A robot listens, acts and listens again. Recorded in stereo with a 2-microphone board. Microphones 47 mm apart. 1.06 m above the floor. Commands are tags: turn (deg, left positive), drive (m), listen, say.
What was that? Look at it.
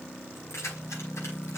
<turn deg="70"/>
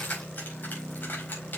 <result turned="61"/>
<turn deg="40"/>
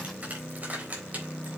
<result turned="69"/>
<turn deg="-35"/>
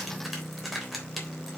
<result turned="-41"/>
<say>Facing the keys jangling, 2 to 4 m away.</say>